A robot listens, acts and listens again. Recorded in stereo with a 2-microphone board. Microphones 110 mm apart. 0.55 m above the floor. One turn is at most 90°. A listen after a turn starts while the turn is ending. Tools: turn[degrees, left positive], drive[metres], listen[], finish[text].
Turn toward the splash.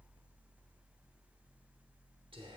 Action: listen[]
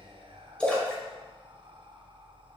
Action: turn[30]
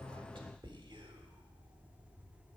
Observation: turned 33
Action: listen[]
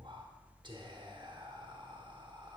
Action: finish[I heard a splash, but can't make it out now. It was about 25° right or 140° left.]